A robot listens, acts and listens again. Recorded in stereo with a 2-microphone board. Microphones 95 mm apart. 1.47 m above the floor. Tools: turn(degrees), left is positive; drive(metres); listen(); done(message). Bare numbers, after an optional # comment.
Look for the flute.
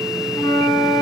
# The flute: about 20° right or 160° right.
turn(-20)
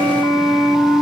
done("Facing the flute.")